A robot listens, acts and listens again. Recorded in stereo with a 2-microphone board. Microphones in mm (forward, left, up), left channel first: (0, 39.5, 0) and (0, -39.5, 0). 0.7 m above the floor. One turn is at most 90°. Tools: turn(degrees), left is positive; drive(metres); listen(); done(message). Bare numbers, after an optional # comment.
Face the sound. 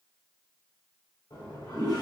# The toilet flushing: about 55° left or 125° left.
turn(55)
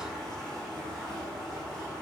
done("Found it: a toilet flushing, straight ahead, 1 to 2 m away.")